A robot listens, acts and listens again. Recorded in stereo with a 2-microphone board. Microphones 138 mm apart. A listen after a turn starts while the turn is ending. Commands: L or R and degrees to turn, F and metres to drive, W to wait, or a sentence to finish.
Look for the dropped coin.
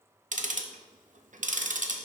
W
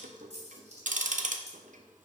R55
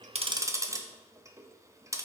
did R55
W
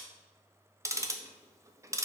I heard a dropped coin, but can't make it out now. It was about straight ahead or 70° right.